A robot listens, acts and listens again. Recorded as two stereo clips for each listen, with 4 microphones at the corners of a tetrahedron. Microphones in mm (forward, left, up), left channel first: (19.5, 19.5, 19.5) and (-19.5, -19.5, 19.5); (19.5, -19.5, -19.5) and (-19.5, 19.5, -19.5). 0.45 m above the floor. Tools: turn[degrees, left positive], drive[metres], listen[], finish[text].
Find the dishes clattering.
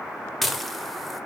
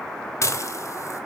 Thought: The dishes clattering: 45° right.
Action: turn[-45]
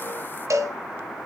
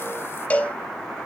Action: listen[]
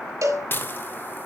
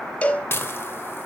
Action: finish[Facing the dishes clattering, under 1 m away.]